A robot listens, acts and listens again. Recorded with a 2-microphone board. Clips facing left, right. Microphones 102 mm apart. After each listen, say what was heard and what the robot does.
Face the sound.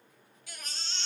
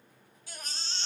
The baby crying: about 30° right or 150° right. Turn 30° right.
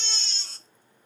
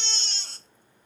So it is at 120° right. Turn 120° right.
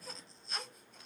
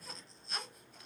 Found it: a baby crying, straight ahead.